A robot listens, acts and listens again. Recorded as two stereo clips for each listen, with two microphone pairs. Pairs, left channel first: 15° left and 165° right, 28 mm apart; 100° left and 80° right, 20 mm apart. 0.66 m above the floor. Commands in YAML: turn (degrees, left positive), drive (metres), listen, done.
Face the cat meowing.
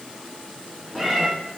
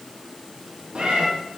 turn: -65
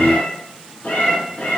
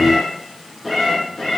turn: 25
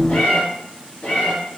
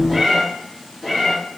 turn: 20
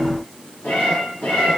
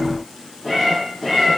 turn: 10
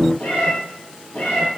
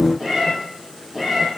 done: "Found it: a cat meowing, straight ahead."